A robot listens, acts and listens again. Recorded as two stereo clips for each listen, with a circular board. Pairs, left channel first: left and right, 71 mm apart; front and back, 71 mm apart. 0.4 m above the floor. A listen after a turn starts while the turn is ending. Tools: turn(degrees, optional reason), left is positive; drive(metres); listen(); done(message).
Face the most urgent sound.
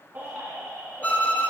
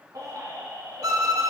turn(degrees=-150, reason="The baby crying: 150° right.")
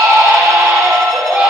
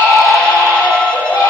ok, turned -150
turn(degrees=-25, reason="The baby crying is now 25° right.")
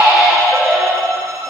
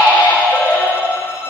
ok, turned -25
done("Found it: a baby crying, straight ahead.")